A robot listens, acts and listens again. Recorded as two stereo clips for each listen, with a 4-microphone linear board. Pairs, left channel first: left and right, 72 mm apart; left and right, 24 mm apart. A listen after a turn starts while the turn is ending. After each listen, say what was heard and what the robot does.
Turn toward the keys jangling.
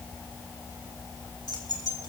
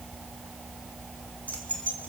The keys jangling: about 75° left or 105° left. Turn 75° left.
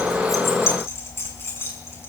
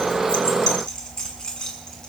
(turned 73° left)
So it is at 35° left. Turn 35° left.
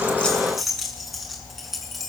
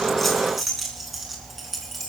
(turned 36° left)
Found it: keys jangling, straight ahead.